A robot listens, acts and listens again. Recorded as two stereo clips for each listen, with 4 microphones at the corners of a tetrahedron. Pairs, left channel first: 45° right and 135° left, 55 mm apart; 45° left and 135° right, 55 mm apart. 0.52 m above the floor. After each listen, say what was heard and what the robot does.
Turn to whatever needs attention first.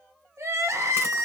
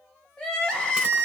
The crying: 120° left. Turn 120° left.
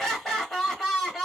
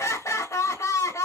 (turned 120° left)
The crying is now 40° left. Turn 40° left.
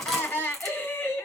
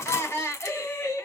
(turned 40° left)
Found it: crying, straight ahead, 1 to 2 m away.